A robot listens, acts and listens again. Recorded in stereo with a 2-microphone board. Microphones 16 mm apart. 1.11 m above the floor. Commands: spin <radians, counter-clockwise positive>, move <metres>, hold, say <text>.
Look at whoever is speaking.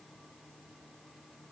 hold
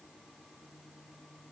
hold
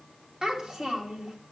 spin -0.87
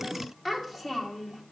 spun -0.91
say Facing the child speaking.